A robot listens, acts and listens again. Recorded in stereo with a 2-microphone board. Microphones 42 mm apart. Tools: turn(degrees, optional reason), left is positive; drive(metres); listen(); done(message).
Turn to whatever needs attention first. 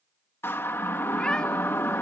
turn(degrees=70, reason="The siren: about 70° left or 110° left.")
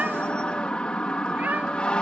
turn(degrees=25, reason="So it is at 25° left.")
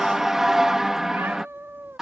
turn(degrees=-15, reason="The siren is now 15° right.")
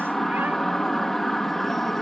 done("Facing the siren.")